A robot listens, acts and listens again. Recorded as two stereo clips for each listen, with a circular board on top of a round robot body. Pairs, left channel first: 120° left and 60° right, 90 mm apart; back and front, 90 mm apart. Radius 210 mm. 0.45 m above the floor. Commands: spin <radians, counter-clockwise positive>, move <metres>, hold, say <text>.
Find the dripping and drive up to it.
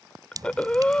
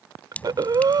spin -1.83
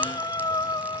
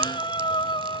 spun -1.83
hold
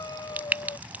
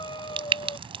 spin 0.26
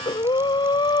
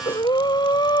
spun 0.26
hold
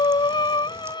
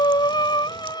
hold
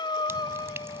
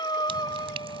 say Facing where the dripping came from. I can't hear it now. I did not reach it.